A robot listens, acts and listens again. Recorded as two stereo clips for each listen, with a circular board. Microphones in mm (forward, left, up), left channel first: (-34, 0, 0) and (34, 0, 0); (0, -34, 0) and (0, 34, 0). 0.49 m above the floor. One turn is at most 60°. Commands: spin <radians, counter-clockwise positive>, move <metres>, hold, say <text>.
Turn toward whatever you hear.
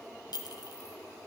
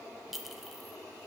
spin 1.05
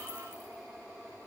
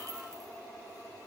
spin 1.05
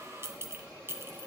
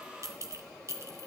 spin 0.87
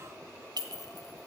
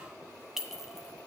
say Facing the clink, 2 to 4 m away.